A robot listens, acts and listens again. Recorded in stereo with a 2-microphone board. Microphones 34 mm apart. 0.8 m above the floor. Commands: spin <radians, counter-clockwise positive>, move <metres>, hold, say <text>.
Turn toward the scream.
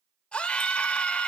spin 0.61
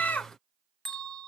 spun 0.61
spin 1.92
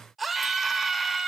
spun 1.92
say Facing the scream, 1 to 2 m away.